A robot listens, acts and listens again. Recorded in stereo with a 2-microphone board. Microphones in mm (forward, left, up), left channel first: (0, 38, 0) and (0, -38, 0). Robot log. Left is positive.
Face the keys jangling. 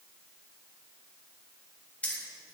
note: The keys jangling: about 20° left or 160° left.
cmd yaw +20
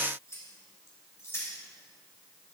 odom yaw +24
note: So it is at 145° left.
cmd yaw +145
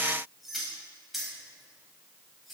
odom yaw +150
end: Facing the keys jangling, over 4 m away.